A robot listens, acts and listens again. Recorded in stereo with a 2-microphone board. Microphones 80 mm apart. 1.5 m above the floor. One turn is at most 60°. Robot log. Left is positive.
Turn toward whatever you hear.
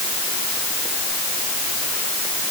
cmd idle
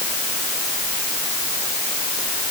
cmd idle
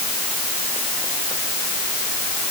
end: I can't make out anything.